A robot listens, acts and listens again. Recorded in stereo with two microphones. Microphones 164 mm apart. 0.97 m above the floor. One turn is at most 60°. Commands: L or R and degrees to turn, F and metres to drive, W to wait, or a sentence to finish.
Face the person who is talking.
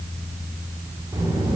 R25
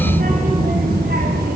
R60
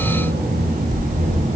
R45
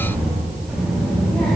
Facing the child speaking.